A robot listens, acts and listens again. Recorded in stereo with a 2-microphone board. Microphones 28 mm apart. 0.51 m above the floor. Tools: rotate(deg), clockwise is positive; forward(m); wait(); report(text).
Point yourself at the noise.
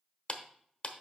rotate(-45)
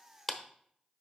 rotate(-10)
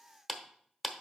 report("Facing the clap.")